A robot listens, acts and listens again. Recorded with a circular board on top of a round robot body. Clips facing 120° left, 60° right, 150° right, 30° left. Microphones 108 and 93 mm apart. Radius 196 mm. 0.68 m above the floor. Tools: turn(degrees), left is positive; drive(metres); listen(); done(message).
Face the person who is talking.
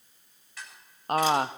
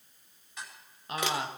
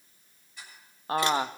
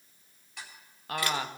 turn(degrees=150)
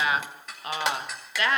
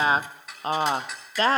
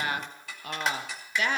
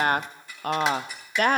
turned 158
done("Facing the woman speaking, under 1 m away.")